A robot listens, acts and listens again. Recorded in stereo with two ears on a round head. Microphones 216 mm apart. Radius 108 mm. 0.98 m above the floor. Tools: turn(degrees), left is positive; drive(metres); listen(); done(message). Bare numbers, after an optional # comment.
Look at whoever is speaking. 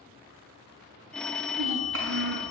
# The child speaking: about 60° right or 120° right.
turn(-60)
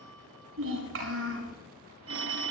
# So it is at 60° right.
turn(-60)
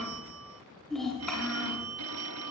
done("Found it: a child speaking, straight ahead.")